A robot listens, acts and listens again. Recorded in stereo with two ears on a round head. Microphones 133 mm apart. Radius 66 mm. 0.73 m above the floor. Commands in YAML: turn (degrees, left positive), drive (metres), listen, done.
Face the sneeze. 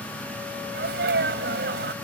turn: -90
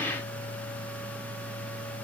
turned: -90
done: "Facing where the sneeze came from. I can't hear it now."